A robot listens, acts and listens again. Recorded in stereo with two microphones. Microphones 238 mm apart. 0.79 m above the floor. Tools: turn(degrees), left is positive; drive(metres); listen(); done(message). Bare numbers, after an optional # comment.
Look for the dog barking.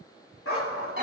turn(90)
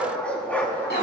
# So it is at 10° left.
turn(10)
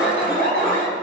listen()
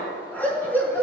# The dog barking is now 10° left.
turn(10)
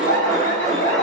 listen()
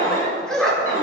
done("Found it: a dog barking, straight ahead, over 4 m away.")